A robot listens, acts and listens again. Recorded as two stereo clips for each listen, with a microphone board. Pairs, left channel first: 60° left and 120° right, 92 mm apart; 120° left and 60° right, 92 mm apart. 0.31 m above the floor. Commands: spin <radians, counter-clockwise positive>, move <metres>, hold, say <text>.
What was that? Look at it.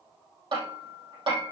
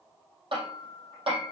spin -1.48
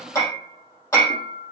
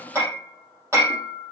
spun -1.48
say Found it: hammering, straight ahead, over 4 m away.